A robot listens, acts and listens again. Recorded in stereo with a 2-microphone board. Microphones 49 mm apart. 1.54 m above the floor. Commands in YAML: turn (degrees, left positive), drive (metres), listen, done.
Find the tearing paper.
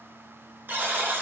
listen: true
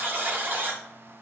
listen: true
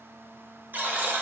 done: "I can't make out tearing paper to turn to."